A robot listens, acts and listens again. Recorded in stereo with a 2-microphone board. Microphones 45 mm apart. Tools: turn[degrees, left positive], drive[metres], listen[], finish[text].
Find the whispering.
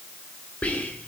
Thought: The whispering: about 30° left or 150° left.
Action: turn[30]
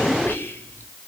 Thought: So it is at 120° left.
Action: turn[120]
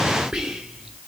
Thought: The whispering is now 15° right.
Action: turn[-15]
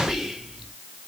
Action: finish[Found it: whispering, straight ahead.]